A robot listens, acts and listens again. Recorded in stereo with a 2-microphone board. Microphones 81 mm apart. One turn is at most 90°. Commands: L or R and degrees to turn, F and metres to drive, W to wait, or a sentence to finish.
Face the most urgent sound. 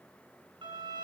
W
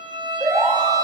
R45
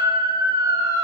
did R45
R85
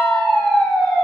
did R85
Facing the siren.